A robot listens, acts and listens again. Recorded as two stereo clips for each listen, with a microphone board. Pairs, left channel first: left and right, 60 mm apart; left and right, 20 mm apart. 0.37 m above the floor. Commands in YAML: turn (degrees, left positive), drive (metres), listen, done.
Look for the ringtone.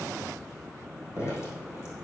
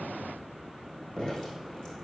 listen: true
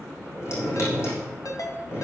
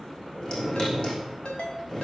turn: 70
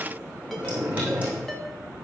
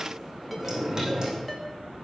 done: "Found it: a ringtone, straight ahead."